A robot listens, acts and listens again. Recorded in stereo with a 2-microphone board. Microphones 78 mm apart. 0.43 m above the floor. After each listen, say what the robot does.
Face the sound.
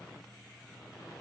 Keep listening.
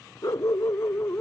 Turn 35° left.
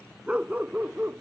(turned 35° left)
Turn 30° right.
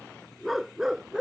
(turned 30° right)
Turn 10° right.
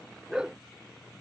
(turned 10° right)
Turn 10° right.
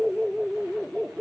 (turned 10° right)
Turn 10° right.
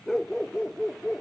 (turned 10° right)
Facing the dog barking.